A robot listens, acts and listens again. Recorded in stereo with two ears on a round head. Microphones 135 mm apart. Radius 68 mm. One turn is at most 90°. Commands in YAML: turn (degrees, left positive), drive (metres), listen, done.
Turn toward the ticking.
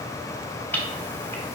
turn: 30
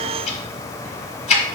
turn: 90
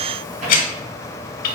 turn: 65
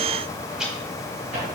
listen: true
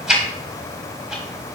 done: "Facing the ticking, 1 to 2 m away."